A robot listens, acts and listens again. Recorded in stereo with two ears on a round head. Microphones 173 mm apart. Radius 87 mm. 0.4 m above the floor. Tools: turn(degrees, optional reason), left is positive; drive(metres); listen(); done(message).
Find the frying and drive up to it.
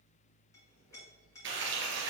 turn(degrees=-65, reason="The frying: about 65° right or 115° right.")
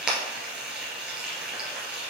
drive(metres=1.0)
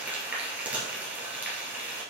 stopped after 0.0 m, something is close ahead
turn(degrees=-10, reason="The frying is now 10° right.")
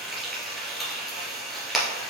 done("Blocked. The frying is further on, straight ahead.")